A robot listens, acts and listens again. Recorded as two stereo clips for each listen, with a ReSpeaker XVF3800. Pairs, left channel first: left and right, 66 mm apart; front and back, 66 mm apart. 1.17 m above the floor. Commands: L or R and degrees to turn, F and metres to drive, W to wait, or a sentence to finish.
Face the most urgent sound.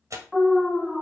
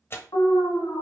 Found it: an alarm, straight ahead, 1 to 2 m away.